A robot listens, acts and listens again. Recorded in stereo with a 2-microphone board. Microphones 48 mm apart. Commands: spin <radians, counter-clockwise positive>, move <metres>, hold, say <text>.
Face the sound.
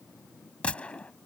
spin 0.35
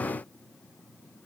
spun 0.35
hold
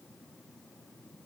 say I heard a gunshot, but can't make it out now. It was about straight ahead or 140° left.